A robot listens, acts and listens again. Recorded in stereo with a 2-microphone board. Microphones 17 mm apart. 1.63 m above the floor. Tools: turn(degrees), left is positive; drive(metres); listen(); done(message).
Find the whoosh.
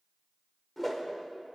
turn(degrees=30)
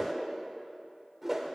turn(degrees=-20)
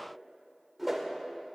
done("Facing the whoosh.")